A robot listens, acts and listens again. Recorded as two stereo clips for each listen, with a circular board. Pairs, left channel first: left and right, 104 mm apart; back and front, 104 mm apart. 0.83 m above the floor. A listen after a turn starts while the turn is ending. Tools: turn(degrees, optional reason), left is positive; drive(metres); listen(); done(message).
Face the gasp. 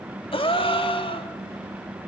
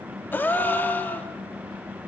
turn(degrees=110, reason="The gasp: 110° left.")
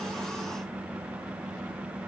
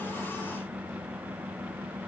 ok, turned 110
done("Facing where the gasp came from. I can't hear it now.")